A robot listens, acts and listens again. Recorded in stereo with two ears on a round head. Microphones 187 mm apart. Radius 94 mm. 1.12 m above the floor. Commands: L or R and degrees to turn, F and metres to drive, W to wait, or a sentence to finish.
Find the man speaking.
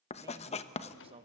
R30
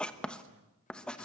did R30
R110
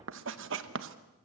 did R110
W
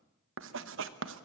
W
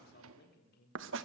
L50
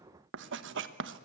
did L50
W
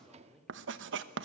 Facing the man speaking.